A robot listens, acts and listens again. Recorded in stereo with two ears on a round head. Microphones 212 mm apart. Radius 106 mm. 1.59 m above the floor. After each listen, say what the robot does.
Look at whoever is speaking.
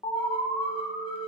Keep listening.
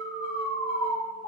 Keep listening.
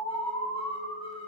I can't make out anyone speaking, only an alarm.